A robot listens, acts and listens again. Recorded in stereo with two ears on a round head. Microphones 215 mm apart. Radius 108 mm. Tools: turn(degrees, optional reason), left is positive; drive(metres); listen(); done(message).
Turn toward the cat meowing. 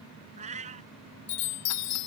turn(degrees=-30, reason="The cat meowing: about 30° right or 150° right.")
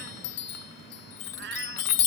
turn(degrees=-110, reason="So it is at 110° right.")
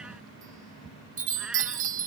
listen()
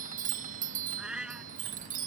done("Facing the cat meowing.")